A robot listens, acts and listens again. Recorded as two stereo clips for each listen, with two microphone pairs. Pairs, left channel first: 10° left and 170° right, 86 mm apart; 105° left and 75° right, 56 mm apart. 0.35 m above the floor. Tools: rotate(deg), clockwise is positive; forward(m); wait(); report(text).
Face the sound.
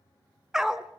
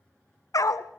rotate(-105)
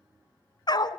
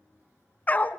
rotate(-45)
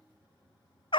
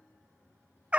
report("Facing the dog barking, under 1 m away.")